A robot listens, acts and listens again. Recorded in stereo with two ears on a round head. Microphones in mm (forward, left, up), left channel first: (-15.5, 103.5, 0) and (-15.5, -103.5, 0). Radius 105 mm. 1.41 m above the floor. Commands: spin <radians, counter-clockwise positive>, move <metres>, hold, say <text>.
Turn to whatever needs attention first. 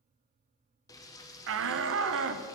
spin -1.13
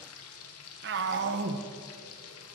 spin -0.87
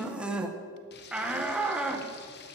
say Found it: a shout, straight ahead, under 1 m away.